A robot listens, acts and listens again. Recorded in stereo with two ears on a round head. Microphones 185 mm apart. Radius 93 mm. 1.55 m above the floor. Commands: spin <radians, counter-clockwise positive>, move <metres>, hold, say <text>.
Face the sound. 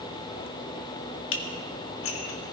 spin 1.13
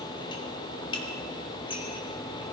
spin 0.44
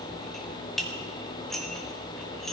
say Found it: dishes clattering, straight ahead.